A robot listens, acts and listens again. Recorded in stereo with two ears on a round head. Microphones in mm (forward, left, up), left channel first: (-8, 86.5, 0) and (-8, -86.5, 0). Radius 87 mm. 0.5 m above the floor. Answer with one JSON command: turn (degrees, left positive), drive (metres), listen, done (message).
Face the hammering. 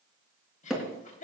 {"turn": 30}
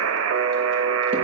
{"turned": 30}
{"listen": true}
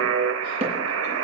{"turn": -30}
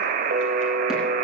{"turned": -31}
{"listen": true}
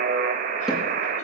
{"listen": true}
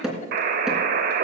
{"done": "Facing the hammering, 2 to 4 m away."}